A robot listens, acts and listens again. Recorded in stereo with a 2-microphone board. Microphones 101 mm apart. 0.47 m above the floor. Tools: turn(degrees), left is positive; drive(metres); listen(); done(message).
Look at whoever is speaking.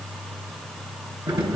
listen()
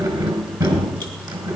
listen()
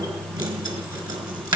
done("I can't make out anyone speaking to turn to.")